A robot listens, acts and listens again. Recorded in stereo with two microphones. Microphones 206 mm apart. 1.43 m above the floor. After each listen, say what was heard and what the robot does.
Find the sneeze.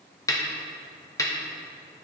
Keep listening.
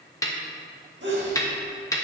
The sneeze: about 60° right or 120° right. Turn 60° right.
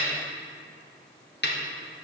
Keep listening.
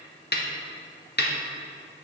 I heard a sneeze, but can't make it out now. It was about straight ahead or 60° right.